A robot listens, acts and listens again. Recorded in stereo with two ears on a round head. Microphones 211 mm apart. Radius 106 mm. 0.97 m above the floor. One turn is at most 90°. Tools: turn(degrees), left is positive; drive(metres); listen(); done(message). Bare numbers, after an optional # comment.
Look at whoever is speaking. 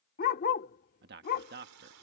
# The man speaking: about 45° right or 135° right.
turn(-45)
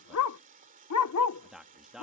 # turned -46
done("Facing the man speaking.")